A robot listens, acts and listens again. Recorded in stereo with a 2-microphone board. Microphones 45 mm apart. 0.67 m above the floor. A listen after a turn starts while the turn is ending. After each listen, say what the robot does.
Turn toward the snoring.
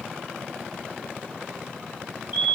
Keep listening.
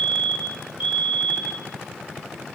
Keep listening.
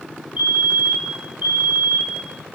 I can't make out snoring to turn to.